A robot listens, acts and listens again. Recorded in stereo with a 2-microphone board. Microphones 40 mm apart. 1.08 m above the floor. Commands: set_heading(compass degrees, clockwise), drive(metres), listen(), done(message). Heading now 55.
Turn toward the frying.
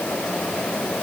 listen()
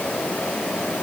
listen()
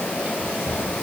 done("I can't make out frying to turn to.")